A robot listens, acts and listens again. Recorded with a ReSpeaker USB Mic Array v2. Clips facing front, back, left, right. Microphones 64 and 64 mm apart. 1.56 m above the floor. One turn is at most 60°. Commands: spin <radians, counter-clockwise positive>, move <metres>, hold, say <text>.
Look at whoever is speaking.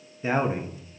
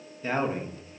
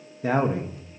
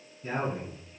spin 1.05
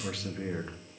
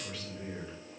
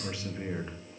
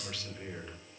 spin 0.35
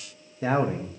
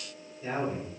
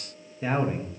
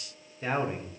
say Facing the man speaking.